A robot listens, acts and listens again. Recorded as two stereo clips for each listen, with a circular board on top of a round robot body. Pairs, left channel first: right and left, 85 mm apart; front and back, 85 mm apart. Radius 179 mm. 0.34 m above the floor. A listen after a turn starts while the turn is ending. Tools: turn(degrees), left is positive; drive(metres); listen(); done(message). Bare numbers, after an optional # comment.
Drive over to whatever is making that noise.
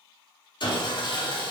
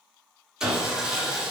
# The sawing: 100° right.
turn(-100)
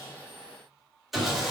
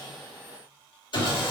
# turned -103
drive(1.0)
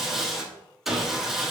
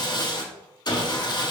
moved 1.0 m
drive(1.0)
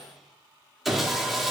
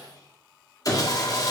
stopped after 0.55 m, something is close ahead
done("I am next to the sawing.")